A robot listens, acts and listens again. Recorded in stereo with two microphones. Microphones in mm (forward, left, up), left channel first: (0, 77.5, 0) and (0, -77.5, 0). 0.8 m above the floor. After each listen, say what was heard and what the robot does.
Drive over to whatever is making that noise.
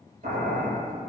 The boiling: about 55° right or 125° right. Turn 55° right.
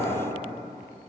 So it is at 60° right. Turn 60° right.
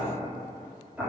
The boiling is now 10° right. Turn 10° right.
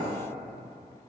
Keep listening.
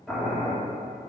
Drive 1.0 m forward.
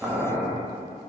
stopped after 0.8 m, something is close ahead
I am next to the boiling.